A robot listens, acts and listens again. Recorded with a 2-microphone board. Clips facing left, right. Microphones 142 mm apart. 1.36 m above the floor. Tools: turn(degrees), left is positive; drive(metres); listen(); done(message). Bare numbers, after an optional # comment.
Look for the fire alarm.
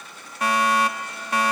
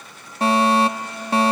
# The fire alarm: about 30° right or 150° right.
turn(-30)
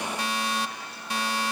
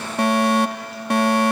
# So it is at 120° right.
turn(-120)
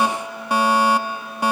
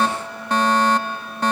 # The fire alarm is now 10° left.
turn(10)
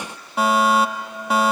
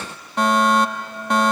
done("Found it: a fire alarm, straight ahead.")